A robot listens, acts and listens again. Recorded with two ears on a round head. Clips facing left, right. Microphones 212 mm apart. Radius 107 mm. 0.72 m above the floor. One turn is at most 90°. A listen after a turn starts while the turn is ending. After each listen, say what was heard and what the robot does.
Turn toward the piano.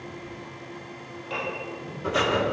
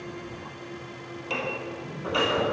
The piano: about 70° right or 110° right. Turn 70° right.
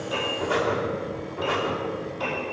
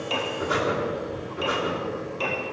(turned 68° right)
So it is at 40° right. Turn 40° right.
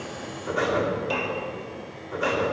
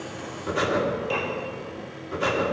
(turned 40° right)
Found it: a piano, straight ahead.